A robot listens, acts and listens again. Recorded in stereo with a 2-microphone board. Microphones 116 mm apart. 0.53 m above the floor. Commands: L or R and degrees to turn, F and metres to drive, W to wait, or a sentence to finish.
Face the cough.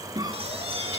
R35
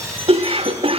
R105
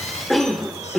Found it: a cough, straight ahead.